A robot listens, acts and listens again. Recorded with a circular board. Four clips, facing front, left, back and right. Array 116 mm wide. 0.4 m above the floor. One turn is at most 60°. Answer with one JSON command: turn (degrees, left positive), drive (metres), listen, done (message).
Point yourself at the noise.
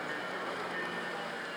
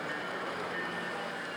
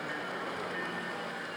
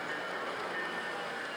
{"listen": true}
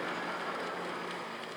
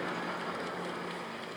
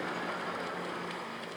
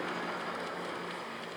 {"listen": true}
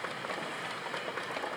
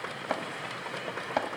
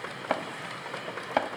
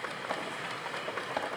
{"turn": 60}
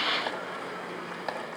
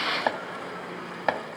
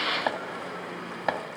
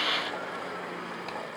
{"turn": 60}
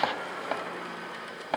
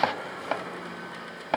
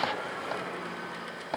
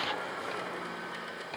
{"turn": 60}
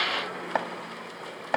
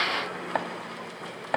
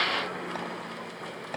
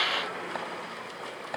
{"turn": 35}
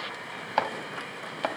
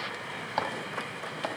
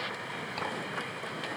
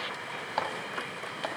{"done": "Found it: chopping, straight ahead, 2 to 4 m away."}